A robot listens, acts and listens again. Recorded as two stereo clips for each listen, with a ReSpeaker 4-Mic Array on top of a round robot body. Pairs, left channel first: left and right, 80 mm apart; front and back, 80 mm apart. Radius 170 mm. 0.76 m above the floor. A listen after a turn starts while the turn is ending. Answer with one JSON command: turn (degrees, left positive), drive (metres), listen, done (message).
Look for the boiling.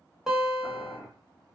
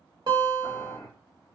{"turn": -25}
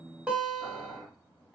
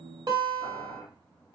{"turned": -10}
{"turn": -15}
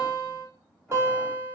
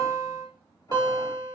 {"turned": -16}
{"listen": true}
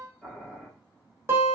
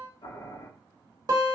{"done": "Facing the boiling."}